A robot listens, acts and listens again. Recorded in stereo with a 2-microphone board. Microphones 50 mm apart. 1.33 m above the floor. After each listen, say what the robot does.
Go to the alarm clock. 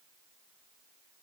Keep listening.
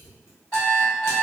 Turn 25° left.
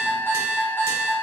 Turn 130° left.
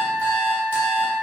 Turn 10° left.
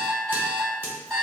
Drive 1.0 m forward.
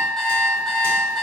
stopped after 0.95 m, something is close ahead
I am next to the alarm clock.